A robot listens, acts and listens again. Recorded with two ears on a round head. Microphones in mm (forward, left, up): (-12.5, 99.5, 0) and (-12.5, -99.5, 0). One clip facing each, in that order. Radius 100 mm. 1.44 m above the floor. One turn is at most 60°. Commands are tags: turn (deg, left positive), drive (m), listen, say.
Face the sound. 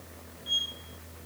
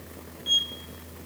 <turn deg="-60"/>
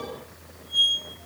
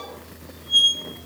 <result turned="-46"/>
<turn deg="-60"/>
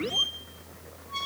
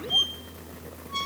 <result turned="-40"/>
<turn deg="-20"/>
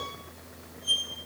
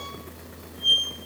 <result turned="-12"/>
<say>Facing the squeak.</say>